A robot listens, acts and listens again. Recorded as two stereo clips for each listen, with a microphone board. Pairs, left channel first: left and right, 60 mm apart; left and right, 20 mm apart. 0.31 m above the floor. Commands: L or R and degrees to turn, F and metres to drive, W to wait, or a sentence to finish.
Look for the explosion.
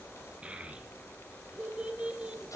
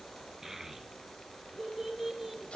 W
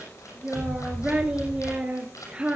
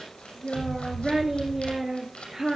R65
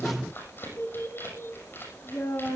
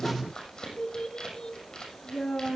W
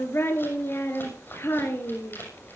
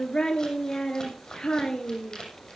I heard an explosion, but can't make it out now. It was about straight ahead or 50° right.